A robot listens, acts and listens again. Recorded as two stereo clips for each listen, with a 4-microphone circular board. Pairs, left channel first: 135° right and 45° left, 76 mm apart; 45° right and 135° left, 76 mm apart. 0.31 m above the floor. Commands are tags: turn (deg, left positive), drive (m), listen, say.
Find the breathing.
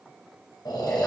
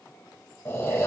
<turn deg="-105"/>
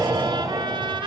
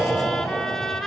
<say>Facing the breathing.</say>